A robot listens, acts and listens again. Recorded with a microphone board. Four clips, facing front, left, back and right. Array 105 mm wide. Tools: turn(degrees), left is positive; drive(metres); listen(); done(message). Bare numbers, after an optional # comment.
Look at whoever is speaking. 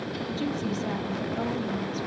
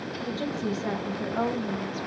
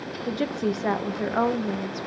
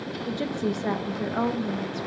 # The woman speaking: 170° right.
turn(-170)
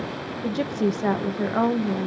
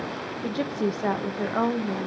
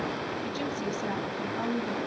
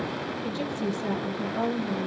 # The woman speaking is now 35° left.
turn(35)
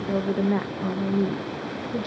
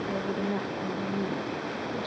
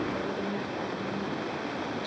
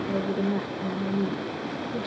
done("Facing the woman speaking, under 1 m away.")